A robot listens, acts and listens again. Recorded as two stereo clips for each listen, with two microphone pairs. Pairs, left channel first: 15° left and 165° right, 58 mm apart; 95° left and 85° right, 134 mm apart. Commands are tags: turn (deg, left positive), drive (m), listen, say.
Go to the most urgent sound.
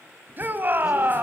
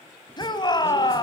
<turn deg="145"/>
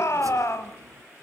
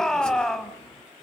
<drive m="1.0"/>
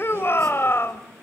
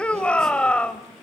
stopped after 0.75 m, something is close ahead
<turn deg="15"/>
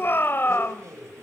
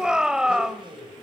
<say>Arrived at the shout, straight ahead.</say>